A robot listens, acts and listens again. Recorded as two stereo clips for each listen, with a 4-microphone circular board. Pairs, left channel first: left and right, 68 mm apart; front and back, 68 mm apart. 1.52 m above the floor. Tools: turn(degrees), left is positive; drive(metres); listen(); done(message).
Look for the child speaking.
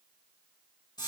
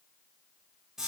listen()
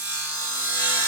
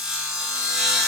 listen()
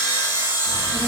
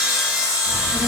turn(degrees=160)
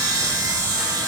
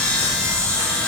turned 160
done("Facing the child speaking.")